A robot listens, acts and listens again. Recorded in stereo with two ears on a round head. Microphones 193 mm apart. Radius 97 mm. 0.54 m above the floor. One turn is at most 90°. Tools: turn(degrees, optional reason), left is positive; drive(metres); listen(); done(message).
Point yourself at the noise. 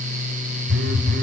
turn(degrees=-55, reason="The phone buzzing: about 55° right or 125° right.")
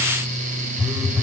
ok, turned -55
turn(degrees=-10, reason="So it is at 10° right.")
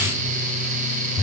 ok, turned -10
done("Found it: a phone buzzing, straight ahead, 2 to 4 m away.")